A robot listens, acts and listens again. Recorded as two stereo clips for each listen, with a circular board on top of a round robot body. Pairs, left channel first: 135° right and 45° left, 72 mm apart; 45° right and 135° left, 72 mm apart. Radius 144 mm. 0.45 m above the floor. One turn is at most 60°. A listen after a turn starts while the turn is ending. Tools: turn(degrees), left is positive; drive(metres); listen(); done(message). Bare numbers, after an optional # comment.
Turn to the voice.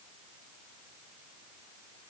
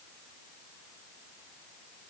listen()
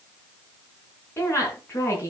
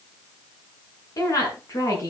# The woman speaking: 85° right.
turn(-60)
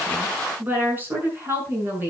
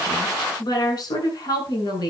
# The woman speaking is now 20° right.
turn(-20)
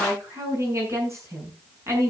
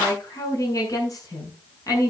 done("Found it: a woman speaking, straight ahead, over 4 m away.")